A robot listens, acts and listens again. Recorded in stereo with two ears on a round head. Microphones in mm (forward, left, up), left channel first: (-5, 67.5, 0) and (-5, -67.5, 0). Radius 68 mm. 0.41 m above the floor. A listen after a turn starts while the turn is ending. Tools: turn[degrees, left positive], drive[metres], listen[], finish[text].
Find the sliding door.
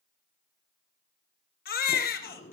Thought: The sliding door: about 50° left or 130° left.
Action: turn[50]
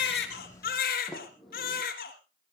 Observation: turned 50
Action: finish[Facing the sliding door.]